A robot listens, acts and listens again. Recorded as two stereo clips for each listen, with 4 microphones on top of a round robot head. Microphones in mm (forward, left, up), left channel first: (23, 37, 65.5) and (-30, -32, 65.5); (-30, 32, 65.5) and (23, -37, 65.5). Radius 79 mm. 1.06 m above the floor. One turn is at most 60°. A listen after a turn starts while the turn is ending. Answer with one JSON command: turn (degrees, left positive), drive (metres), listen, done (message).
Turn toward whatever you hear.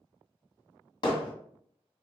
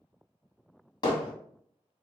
{"turn": 60}
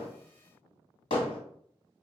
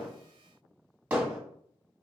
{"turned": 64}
{"turn": 25}
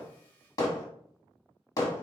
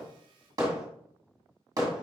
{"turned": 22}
{"done": "Found it: hammering, straight ahead."}